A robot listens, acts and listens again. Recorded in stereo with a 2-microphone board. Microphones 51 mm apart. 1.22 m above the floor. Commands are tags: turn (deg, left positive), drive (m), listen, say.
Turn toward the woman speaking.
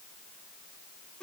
<listen/>
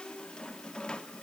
<listen/>
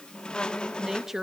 <turn deg="-30"/>
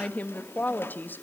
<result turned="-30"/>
<turn deg="40"/>
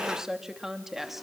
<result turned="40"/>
<say>Found it: a woman speaking, straight ahead.</say>